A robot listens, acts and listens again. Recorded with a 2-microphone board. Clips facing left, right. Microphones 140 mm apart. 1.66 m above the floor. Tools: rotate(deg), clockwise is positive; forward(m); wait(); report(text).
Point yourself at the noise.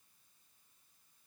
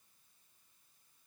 wait()
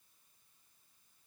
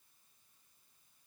wait()
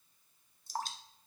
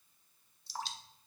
rotate(-50)
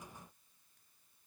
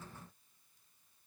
wait()
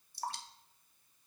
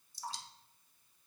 rotate(-80)
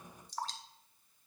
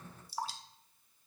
rotate(10)
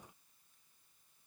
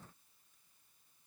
wait()
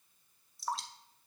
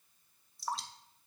report("Facing the dripping, under 1 m away.")